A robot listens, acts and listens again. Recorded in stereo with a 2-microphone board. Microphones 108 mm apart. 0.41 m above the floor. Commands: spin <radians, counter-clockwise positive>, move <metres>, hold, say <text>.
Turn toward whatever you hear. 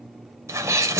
spin -0.52
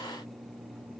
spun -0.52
hold
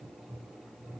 say I heard a sneeze, but can't make it out now. It was about straight ahead or 120° right.